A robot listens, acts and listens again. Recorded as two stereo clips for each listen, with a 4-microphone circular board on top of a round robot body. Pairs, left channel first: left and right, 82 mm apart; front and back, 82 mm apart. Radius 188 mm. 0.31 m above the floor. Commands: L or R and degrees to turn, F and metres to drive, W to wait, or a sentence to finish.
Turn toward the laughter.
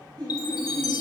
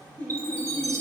R75
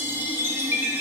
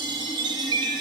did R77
W
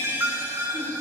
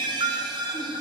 W
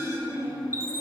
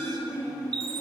R25
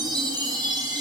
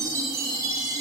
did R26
W
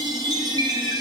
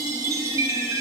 W
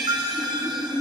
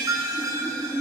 R20
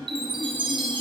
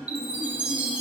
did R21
W
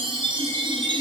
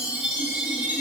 W
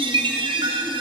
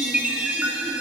I heard laughter from this way, but can't make it out now.